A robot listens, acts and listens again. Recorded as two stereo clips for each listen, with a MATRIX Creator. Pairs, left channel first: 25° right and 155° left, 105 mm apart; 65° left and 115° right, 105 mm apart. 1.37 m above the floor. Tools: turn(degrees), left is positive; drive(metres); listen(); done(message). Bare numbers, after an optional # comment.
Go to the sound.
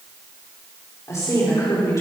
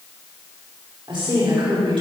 # The woman speaking: 80° right.
turn(-80)
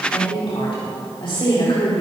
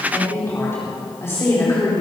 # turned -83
drive(1.0)
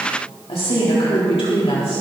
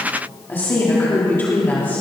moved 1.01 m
drive(1.0)
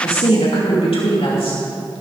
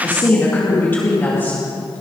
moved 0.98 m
drive(1.0)
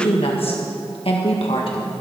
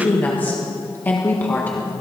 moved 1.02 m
drive(1.0)
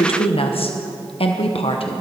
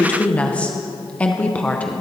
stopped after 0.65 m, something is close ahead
# The woman speaking is now 10° right.
turn(-10)
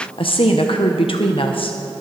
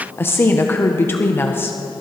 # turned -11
done("Arrived at the woman speaking, straight ahead.")